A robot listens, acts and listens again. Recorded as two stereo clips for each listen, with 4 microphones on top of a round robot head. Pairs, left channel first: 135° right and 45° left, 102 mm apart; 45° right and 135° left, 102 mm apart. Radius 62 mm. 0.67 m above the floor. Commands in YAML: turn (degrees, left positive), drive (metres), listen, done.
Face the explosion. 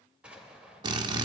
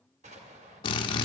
turn: 125
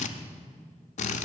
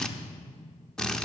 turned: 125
done: "I heard an explosion from this way, but can't make it out now."